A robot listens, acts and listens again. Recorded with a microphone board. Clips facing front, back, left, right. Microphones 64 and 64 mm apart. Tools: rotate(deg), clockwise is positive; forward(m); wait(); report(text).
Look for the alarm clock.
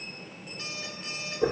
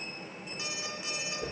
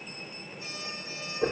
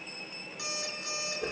rotate(105)
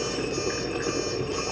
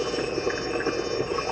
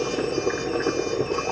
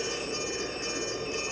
wait()
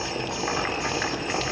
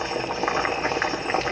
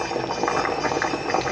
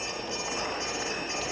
wait()
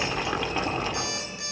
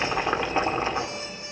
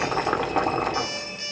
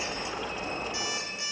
rotate(15)
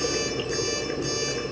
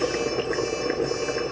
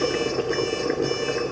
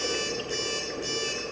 wait()
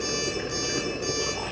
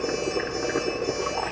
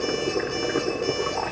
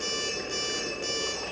wait()
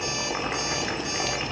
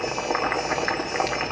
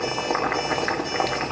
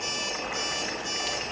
report("I heard an alarm clock from this way, but can't make it out now.")